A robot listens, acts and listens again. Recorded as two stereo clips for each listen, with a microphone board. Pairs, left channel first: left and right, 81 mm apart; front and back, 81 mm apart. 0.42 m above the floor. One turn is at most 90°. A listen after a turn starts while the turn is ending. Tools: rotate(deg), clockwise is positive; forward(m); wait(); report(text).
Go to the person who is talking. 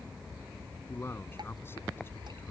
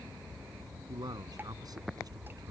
rotate(-90)
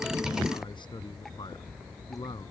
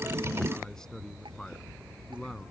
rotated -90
rotate(-85)
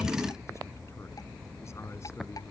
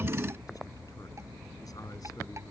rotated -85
wait()
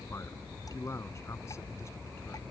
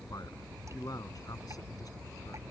rotate(-35)
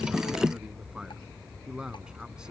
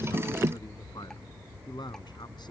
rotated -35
rotate(10)
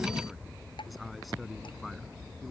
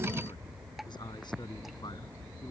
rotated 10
forward(1.0)
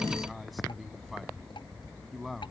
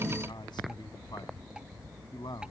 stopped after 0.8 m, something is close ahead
report("Blocked. The man speaking is further on, straight ahead.")